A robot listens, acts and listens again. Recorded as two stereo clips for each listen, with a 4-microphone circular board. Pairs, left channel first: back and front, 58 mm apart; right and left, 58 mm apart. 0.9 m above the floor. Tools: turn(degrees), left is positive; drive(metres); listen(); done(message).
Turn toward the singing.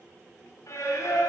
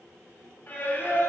turn(degrees=-150)
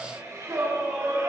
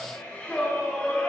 turn(degrees=-20)
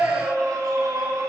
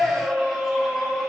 done("Found it: singing, straight ahead, 2 to 4 m away.")